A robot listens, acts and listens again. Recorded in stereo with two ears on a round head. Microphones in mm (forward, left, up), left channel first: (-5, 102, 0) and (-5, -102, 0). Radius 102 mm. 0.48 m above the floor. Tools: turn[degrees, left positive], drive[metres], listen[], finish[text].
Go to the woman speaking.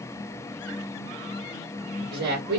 Thought: The woman speaking: about 45° right or 135° right.
Action: turn[-45]
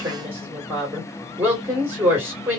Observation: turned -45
Thought: So it is at 10° right.
Action: turn[-10]
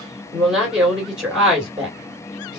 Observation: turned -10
Action: drive[1.0]
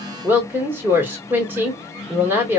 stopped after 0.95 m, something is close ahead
Thought: The woman speaking is now 15° right.
Action: turn[-15]
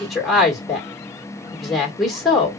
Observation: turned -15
Action: finish[Arrived at the woman speaking, straight ahead.]